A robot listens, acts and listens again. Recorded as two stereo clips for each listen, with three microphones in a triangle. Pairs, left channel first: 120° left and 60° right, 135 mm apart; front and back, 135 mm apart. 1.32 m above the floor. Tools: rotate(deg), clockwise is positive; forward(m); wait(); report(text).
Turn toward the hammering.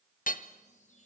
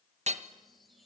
rotate(-140)
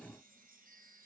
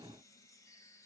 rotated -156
rotate(15)
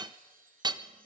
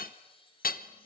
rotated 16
report("Facing the hammering, 1 to 2 m away.")